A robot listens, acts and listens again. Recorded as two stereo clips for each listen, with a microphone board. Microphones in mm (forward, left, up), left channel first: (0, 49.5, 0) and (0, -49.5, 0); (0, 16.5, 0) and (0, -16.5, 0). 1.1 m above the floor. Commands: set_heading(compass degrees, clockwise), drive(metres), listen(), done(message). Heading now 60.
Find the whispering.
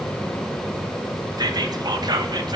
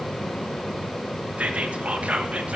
set_heading(105)
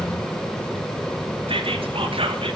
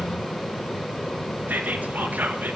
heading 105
set_heading(190)
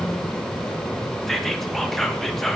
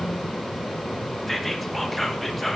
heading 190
done("Facing the whispering.")